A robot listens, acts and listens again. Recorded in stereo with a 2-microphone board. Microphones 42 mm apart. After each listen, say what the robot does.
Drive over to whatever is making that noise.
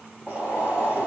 Turn 45° right.
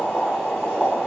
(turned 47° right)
Drive 1.0 m forward.
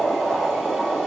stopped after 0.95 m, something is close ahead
Turn 15° right.
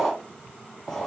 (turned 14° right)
I am next to the boiling.